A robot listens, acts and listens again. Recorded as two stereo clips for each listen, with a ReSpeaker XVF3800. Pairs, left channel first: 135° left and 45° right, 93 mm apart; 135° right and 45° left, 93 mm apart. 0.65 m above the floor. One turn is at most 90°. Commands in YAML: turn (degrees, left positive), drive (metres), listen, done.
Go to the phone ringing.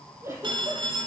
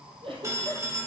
turn: -15
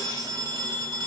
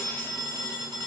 drive: 1.0
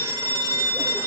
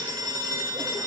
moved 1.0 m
drive: 1.0
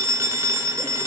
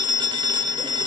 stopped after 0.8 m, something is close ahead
turn: 10
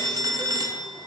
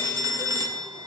done: "Arrived at the phone ringing, straight ahead."